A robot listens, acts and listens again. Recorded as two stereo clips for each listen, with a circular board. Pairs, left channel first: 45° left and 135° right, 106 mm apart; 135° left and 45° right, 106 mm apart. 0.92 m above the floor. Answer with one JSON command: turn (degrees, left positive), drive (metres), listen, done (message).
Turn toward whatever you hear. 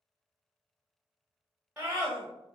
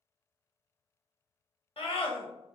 {"turn": 150}
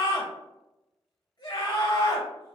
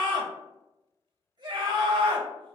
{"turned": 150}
{"turn": -15}
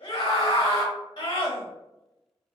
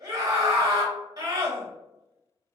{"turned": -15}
{"done": "Found it: a scream, straight ahead, under 1 m away."}